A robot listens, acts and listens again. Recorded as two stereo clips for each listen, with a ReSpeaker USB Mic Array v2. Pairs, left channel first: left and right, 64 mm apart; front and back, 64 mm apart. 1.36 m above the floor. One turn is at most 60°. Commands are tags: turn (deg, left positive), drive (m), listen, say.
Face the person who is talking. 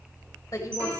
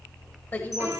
<turn deg="60"/>
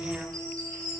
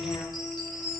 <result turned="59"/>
<listen/>
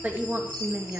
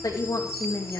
<turn deg="-35"/>
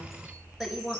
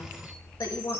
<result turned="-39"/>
<turn deg="-10"/>
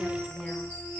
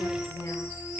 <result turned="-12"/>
<listen/>
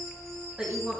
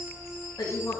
<turn deg="-15"/>
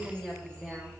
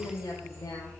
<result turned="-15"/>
<say>Found it: a woman speaking, straight ahead.</say>